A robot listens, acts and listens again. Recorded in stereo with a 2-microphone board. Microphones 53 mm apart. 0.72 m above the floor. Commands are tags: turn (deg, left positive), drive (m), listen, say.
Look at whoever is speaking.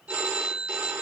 <listen/>
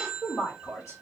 <turn deg="60"/>
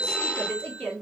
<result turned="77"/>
<turn deg="25"/>
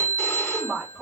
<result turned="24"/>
<say>Found it: a woman speaking, straight ahead, 1 to 2 m away.</say>